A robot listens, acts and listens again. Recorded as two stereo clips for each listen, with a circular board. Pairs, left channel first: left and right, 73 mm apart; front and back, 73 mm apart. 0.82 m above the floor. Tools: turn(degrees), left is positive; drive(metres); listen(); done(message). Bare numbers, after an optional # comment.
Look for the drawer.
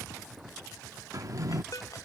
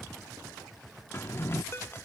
# The drawer: 55° right.
turn(-55)
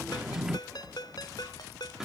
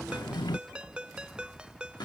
# The drawer is now 10° right.
turn(-10)
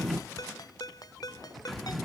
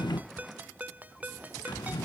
done("Facing the drawer.")